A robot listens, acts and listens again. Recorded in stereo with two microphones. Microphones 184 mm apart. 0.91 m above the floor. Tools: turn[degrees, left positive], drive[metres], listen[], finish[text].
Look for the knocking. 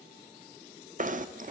Thought: The knocking: about 45° right or 135° right.
Action: turn[-45]
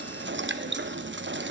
Thought: So it is at 90° right.
Action: turn[-90]
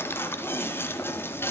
Thought: The knocking is now 10° left.
Action: turn[10]
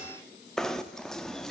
Action: finish[Facing the knocking.]